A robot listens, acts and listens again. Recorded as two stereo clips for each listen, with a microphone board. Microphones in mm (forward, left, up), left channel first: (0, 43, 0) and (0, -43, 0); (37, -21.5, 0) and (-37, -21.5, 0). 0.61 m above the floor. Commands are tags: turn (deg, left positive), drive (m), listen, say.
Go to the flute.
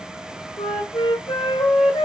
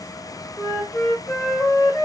<turn deg="70"/>
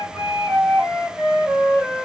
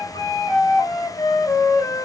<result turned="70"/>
<turn deg="-10"/>
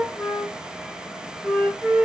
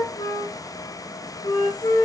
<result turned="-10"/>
<drive m="1.0"/>
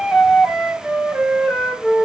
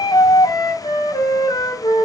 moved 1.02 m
<drive m="1.0"/>
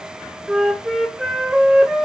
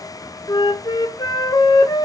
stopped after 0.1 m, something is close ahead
<say>Arrived at the flute, straight ahead.</say>